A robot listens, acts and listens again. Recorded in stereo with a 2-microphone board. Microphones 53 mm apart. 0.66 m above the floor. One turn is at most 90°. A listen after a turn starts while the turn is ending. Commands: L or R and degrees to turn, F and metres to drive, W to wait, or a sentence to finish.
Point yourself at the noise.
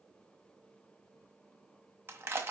R50
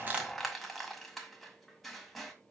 Facing the crushing.